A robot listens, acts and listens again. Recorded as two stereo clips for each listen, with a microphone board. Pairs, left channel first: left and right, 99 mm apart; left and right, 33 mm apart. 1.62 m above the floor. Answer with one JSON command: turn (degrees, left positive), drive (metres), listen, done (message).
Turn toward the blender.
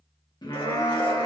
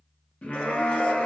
{"turn": 70}
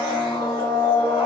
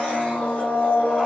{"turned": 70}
{"turn": 40}
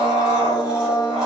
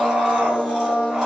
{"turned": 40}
{"turn": -10}
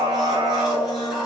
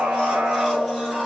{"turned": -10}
{"done": "Found it: a blender, straight ahead."}